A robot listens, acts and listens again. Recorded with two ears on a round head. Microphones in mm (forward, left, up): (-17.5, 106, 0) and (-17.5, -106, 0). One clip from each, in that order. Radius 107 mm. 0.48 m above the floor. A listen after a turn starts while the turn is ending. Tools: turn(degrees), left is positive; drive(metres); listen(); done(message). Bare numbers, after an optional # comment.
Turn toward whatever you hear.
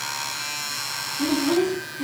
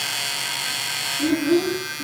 # The child speaking: about 50° left or 130° left.
turn(50)
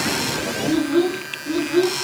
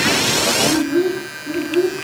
# So it is at 80° left.
turn(80)
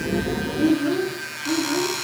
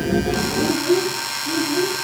done("Found it: a child speaking, straight ahead.")